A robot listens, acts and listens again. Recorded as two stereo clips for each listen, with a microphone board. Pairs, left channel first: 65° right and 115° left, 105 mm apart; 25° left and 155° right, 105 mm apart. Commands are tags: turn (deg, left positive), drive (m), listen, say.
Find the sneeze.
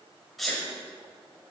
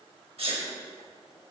<turn deg="-155"/>
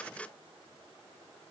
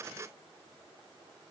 <say>Facing where the sneeze came from. I can't hear it now.</say>